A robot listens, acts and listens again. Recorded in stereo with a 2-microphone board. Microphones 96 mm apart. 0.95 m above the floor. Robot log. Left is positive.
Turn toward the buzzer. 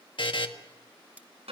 note: The buzzer: about 60° left or 120° left.
cmd yaw +60
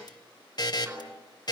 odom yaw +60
note: So it is at 50° left.
cmd yaw +50
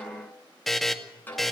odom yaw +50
end: Found it: a buzzer, straight ahead, 1 to 2 m away.